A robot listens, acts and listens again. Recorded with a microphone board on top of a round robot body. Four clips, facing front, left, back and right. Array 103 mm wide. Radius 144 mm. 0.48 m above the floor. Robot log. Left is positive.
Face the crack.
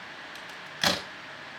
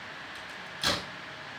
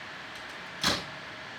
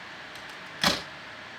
note: The crack: 40° right.
cmd yaw -40
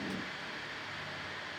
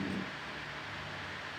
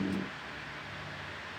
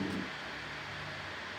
end: I heard a crack from this way, but can't make it out now.